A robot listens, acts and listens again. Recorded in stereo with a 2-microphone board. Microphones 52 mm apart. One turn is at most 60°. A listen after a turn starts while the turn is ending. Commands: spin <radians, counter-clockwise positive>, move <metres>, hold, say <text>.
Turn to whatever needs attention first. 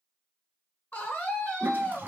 spin 0.61
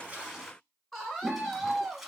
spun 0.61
spin 0.17
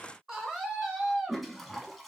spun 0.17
say Facing the scream, 1 to 2 m away.